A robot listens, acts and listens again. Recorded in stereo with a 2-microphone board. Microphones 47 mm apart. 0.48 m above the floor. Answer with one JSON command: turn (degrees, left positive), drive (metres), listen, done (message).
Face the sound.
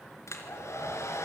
{"turn": 90}
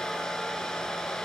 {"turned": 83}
{"turn": 10}
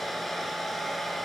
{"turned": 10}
{"done": "Facing the hair dryer, 2 to 4 m away."}